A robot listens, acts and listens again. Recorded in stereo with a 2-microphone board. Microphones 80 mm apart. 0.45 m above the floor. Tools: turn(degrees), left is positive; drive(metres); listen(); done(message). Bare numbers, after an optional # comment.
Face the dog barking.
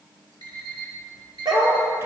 # The dog barking: about 65° right or 115° right.
turn(-65)
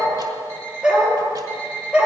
# So it is at 15° right.
turn(-15)
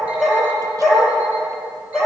done("Found it: a dog barking, straight ahead, over 4 m away.")